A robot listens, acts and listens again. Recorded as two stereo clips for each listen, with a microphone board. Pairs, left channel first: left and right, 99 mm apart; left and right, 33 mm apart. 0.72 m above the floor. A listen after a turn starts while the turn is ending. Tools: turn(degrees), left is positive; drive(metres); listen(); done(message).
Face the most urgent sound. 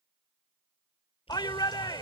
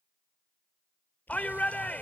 turn(degrees=50)
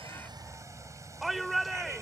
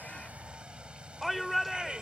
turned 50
done("Facing the shout.")